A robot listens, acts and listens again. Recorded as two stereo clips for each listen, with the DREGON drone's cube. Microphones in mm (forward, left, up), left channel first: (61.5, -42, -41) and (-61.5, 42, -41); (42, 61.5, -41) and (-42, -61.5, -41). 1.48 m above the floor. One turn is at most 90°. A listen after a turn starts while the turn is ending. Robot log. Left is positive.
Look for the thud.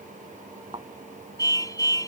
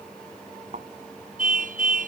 note: The thud: 160° right.
cmd yaw -90
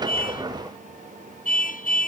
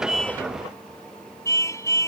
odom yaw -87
note: Nothing new. It was at 70° right.
cmd yaw -70
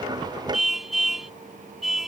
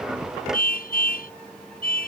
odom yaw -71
end: Facing where the thud came from. I can't hear it now.